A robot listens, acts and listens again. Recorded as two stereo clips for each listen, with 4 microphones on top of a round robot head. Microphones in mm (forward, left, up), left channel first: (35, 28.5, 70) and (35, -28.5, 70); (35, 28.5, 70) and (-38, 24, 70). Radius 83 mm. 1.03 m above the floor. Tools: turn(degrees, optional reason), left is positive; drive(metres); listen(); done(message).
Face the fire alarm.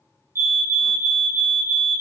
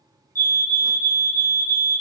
turn(degrees=-50, reason="The fire alarm: 50° right.")
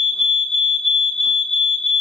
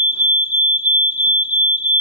turn(degrees=10, reason="The fire alarm is now 10° left.")
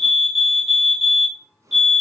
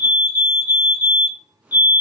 done("Found it: a fire alarm, straight ahead.")